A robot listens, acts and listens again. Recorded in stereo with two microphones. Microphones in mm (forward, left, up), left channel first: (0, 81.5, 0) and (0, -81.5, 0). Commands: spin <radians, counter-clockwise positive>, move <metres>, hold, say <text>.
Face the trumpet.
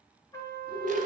spin 0.35
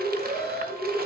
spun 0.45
hold
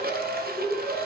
hold
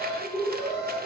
say I heard a trumpet, but can't make it out now. It was about 5° right or 135° left.